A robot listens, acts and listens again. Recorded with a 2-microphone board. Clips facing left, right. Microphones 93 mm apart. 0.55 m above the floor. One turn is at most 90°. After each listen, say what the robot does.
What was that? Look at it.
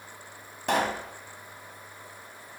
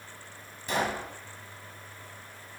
Turn 65° left.
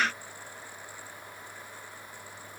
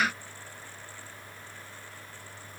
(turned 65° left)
Keep listening.
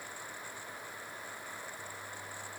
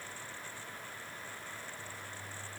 I heard a pop, but can't make it out now. It was about straight ahead or 50° left.